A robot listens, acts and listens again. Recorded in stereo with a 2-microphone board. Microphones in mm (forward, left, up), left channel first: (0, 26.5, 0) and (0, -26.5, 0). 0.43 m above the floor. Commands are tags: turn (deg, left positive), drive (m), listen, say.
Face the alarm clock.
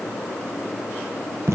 <listen/>
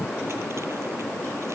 <listen/>
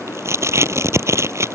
<say>I can't make out an alarm clock to turn to.</say>